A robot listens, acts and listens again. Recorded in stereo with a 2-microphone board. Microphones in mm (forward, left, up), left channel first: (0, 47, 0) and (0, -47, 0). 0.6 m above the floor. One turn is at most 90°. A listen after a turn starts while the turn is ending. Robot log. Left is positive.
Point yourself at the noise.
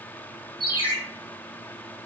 note: The ringtone: about 50° right or 130° right.
cmd yaw -50
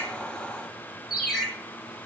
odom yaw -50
end: Facing the ringtone.